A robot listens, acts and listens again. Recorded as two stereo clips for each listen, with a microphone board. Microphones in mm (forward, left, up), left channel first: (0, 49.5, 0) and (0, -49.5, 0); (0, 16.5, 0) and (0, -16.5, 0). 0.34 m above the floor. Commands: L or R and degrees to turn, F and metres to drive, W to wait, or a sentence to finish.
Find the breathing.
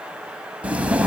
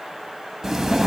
R30
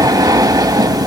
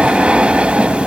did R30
R135
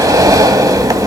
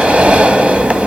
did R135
R40
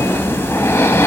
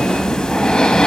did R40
L25
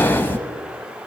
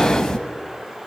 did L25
L20
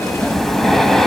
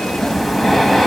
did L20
Found it: breathing, straight ahead.